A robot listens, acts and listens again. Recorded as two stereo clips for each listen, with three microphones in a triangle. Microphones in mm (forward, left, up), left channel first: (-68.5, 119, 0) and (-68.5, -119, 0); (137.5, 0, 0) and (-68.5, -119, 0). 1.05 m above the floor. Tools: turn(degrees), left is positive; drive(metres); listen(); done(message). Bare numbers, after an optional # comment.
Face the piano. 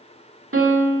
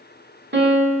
# The piano: 110° right.
turn(-110)
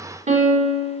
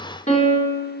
# The piano is now 30° right.
turn(-30)
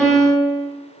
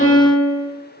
done("Facing the piano.")